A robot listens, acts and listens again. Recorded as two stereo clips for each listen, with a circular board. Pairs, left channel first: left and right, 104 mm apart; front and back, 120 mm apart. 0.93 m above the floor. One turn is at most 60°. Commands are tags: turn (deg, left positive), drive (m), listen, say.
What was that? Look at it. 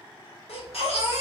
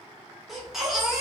<turn deg="60"/>
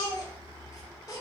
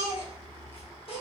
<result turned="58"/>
<turn deg="35"/>
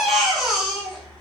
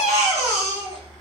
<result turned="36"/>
<say>Facing the baby crying.</say>